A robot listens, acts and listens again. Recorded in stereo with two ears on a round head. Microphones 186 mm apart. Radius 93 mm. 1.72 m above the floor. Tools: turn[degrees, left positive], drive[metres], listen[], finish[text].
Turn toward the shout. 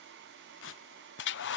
Action: listen[]
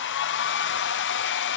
Action: listen[]
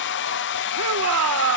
Action: turn[-90]
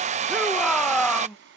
Action: finish[Facing the shout.]